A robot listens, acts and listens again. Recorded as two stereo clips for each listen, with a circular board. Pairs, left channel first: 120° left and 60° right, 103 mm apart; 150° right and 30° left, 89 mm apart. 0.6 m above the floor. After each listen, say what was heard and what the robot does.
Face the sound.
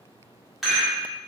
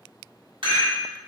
The rattle: 30° left. Turn 30° left.
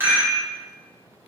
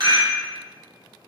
Found it: a rattle, straight ahead.